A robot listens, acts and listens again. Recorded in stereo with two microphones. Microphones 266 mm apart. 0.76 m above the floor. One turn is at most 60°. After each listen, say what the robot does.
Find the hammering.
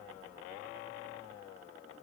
Keep listening.
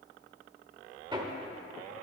Turn 15° right.
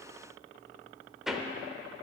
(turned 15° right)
Facing the hammering.